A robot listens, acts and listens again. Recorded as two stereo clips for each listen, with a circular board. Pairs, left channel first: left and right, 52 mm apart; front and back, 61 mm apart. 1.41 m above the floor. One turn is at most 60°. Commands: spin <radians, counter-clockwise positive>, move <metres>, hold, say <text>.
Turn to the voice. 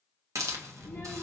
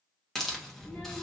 spin 1.05
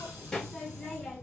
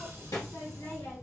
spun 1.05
spin 0.17
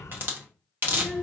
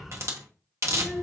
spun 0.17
say Found it: a child speaking, straight ahead, 1 to 2 m away.